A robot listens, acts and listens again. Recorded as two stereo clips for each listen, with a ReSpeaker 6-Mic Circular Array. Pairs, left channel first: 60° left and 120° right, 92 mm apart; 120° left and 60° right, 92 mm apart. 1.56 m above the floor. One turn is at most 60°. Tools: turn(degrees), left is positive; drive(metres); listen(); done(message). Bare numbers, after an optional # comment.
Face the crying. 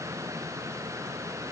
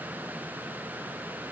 listen()
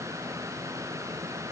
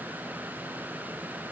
listen()
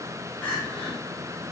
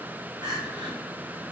# The crying: 20° right.
turn(-20)
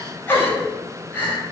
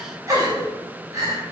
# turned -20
# The crying is now 10° right.
turn(-10)
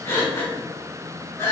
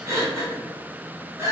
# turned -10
done("Found it: crying, straight ahead, 1 to 2 m away.")